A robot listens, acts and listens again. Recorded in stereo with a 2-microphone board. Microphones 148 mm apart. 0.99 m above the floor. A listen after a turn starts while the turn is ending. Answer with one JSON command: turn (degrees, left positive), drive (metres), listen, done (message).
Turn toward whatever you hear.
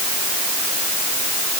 {"listen": true}
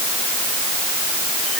{"listen": true}
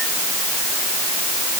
{"done": "I can't make out anything to turn to."}